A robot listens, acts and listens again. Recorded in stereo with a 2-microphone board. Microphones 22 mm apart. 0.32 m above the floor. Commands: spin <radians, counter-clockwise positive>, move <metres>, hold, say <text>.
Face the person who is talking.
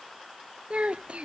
spin -1.22
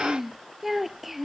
spin -0.17
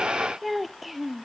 say Found it: a child speaking, straight ahead.